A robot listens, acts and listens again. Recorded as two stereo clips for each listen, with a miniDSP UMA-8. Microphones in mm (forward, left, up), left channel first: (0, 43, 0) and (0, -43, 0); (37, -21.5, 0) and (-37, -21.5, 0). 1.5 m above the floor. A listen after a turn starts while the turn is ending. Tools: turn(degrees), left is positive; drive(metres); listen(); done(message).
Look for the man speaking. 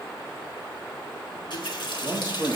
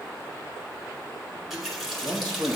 turn(degrees=-155)
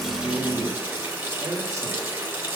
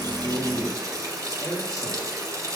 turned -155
turn(degrees=-40)
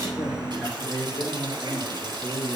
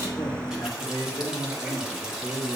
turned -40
turn(degrees=10)
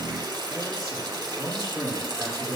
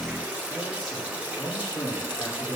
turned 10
done("Found it: a man speaking, straight ahead.")